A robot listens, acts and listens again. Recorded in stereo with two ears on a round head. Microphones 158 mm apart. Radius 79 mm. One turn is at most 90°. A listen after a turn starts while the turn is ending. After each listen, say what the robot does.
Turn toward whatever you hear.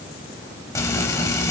Turn 20° left.
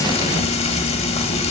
Turn 90° left.
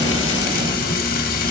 Turn 50° left.
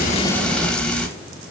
Facing the frying, under 1 m away.